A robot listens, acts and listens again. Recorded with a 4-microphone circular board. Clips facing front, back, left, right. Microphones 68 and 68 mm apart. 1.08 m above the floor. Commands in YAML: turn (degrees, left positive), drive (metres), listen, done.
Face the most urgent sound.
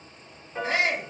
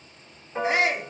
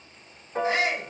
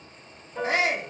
turn: -105
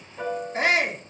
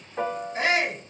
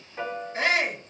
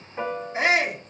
turn: -20
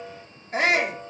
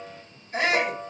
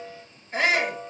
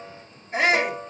done: "Facing the shout."